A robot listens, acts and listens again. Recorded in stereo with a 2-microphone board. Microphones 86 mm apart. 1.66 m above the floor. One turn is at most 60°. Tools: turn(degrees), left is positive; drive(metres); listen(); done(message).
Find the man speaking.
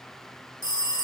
listen()
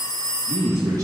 turn(degrees=-45)
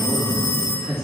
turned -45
done("Facing the man speaking.")